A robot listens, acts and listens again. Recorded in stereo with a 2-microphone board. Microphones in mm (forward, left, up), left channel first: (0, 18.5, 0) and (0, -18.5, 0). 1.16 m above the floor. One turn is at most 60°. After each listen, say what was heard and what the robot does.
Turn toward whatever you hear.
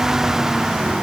Keep listening.
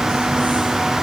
Keep listening.
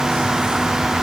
I can't make out anything.